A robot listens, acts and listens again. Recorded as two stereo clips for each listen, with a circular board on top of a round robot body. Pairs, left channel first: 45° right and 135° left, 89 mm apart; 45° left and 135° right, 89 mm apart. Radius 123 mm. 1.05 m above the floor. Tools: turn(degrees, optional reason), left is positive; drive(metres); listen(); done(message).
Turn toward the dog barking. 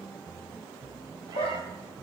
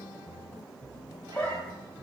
turn(degrees=-30, reason="The dog barking: 30° right.")
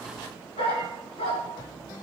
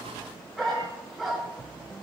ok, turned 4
turn(degrees=-45, reason="The dog barking is now 45° right.")
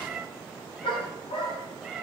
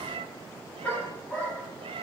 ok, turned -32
turn(degrees=-30, reason="The dog barking is now 30° right.")
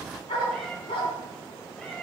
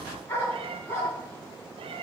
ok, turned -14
turn(degrees=-20, reason="The dog barking is now 20° right.")
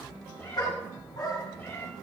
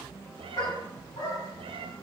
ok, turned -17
done("Facing the dog barking.")